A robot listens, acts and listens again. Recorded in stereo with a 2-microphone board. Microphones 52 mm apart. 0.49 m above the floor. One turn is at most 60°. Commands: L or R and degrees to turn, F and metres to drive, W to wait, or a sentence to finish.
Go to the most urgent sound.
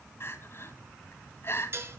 L45
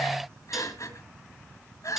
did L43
L60
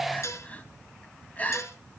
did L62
L25
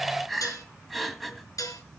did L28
F1.0
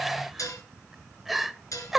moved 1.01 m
F1.0
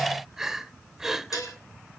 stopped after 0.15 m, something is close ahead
R10
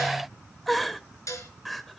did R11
I am next to the crying.